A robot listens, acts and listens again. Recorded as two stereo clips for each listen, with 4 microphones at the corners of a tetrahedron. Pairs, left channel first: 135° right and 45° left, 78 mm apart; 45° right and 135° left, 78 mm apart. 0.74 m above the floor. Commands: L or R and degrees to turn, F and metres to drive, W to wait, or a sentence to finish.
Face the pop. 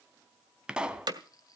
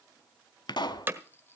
R30
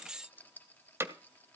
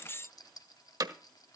Facing where the pop came from. I can't hear it now.